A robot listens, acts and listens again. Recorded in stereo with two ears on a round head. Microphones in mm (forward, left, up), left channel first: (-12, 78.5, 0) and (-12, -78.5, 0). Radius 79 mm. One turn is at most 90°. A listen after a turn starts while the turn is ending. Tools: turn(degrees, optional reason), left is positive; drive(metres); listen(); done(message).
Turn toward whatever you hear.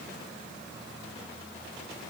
listen()
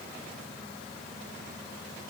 listen()
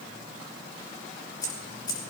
turn(degrees=20, reason="The keys jangling: about 20° left or 160° left.")
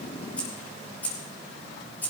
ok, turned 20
turn(degrees=30)
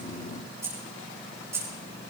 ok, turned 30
turn(degrees=-15, reason="So it is at 15° right.")
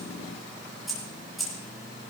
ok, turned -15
done("Facing the keys jangling.")